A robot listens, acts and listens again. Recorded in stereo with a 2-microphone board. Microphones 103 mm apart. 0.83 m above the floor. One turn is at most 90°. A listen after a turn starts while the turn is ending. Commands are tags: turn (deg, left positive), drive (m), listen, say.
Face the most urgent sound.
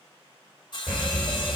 <turn deg="-20"/>
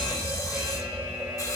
<turn deg="-90"/>
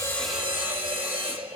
<turn deg="-85"/>
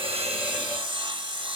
<listen/>
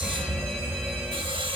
<turn deg="15"/>
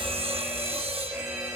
<say>Found it: a fire alarm, straight ahead, over 4 m away.</say>